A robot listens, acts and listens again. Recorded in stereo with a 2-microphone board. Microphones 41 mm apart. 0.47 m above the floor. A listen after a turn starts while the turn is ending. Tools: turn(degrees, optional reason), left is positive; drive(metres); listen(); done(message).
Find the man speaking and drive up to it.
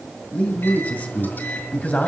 turn(degrees=45, reason="The man speaking: about 45° left or 135° left.")
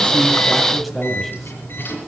drive(metres=1.0)
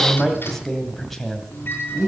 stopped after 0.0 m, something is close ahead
done("Something is in my way. I am facing the man speaking but have not reached it.")